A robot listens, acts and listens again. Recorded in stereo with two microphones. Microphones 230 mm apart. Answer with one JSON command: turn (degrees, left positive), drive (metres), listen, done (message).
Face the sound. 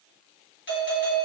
{"turn": 55}
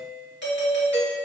{"turn": 60}
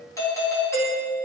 {"turn": 15}
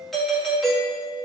{"done": "Facing the doorbell."}